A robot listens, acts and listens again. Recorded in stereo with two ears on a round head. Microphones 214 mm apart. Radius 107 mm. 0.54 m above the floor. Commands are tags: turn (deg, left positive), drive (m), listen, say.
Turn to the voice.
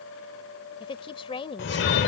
<turn deg="25"/>
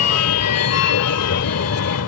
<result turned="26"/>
<listen/>
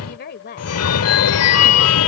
<turn deg="130"/>
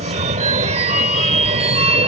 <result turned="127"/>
<listen/>
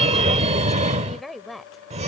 <say>Found it: a woman speaking, straight ahead.</say>